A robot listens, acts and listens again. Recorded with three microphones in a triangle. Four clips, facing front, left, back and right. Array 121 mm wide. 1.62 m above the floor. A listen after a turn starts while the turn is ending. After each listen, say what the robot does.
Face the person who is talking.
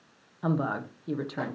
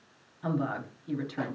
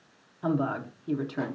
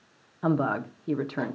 Turn 80° right.
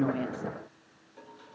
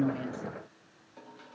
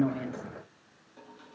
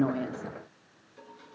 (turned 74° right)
Keep listening.
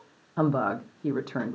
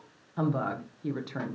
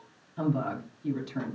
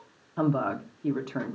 Turn 10° right.
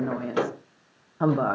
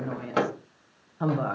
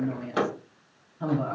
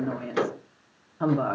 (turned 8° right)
Facing the woman speaking.